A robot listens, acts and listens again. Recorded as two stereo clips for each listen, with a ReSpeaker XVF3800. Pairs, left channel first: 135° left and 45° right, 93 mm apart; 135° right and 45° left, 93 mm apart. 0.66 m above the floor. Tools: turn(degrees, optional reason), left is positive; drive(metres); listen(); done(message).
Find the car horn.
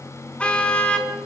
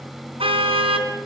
turn(degrees=55, reason="The car horn: 55° left.")
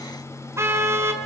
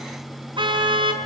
turn(degrees=15, reason="The car horn is now 15° left.")
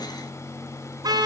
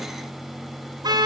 done("Found it: a car horn, straight ahead, over 4 m away.")